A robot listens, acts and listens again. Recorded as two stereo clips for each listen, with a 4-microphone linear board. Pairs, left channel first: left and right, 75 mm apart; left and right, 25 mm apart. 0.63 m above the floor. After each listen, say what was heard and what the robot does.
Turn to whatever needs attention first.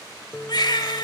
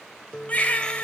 The baby crying: about 70° left or 110° left. Turn 70° left.
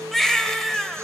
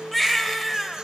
Facing the baby crying.